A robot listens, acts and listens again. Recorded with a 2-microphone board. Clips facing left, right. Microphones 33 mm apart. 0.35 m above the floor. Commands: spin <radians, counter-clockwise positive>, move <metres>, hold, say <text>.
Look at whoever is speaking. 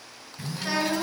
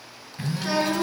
spin 0.52
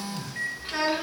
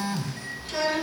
spin 2.62
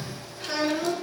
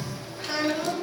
say Facing the child speaking.